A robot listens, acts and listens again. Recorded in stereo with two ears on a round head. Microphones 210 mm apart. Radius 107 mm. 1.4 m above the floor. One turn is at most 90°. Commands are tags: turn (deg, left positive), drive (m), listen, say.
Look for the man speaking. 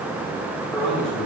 <turn deg="30"/>
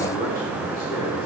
<listen/>
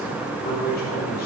<turn deg="90"/>
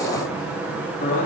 <turn deg="30"/>
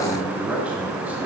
<say>Found it: a man speaking, straight ahead, 2 to 4 m away.</say>